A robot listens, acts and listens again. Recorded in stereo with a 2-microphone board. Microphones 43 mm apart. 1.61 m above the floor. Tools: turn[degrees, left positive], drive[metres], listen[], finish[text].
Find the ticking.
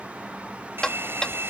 Thought: The ticking: about 20° left or 160° left.
Action: turn[20]
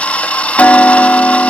Thought: So it is at 140° left.
Action: turn[140]
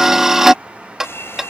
Thought: The ticking is now 10° right.
Action: turn[-10]
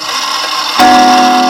Action: finish[Facing the ticking.]